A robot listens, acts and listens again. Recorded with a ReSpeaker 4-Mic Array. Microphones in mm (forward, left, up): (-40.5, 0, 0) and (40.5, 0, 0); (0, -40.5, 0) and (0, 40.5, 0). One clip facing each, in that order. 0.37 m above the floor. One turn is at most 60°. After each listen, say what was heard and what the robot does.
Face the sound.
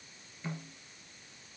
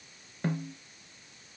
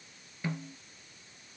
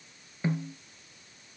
The snare drum: 25° left. Turn 25° left.
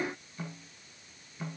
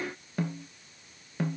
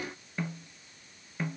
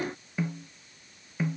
Facing the snare drum.